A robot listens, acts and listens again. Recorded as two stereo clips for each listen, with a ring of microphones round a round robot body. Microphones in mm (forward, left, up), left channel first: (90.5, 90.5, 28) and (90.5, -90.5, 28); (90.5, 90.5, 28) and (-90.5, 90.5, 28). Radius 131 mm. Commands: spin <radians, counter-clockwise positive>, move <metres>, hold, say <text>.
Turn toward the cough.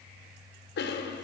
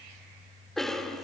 spin 1.57
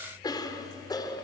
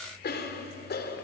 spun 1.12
spin 0.44
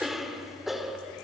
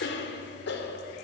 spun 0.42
say Facing the cough.